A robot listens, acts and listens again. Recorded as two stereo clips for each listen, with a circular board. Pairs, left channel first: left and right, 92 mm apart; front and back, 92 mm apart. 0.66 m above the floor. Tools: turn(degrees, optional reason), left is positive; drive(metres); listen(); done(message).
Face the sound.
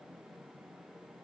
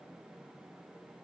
listen()
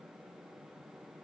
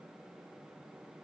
listen()
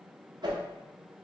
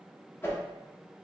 turn(degrees=-60, reason="The whoosh: 60° right.")
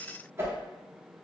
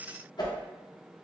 turn(degrees=-30, reason="The whoosh is now 30° right.")
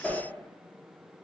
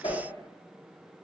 done("Facing the whoosh, under 1 m away.")